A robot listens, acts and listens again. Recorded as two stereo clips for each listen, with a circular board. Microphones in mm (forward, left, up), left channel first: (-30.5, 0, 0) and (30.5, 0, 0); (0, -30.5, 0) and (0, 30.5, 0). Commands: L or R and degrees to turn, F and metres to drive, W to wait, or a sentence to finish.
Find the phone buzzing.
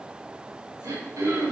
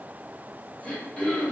W
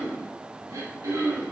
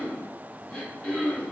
W
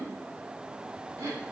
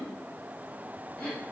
I can't make out a phone buzzing, only throat clearing.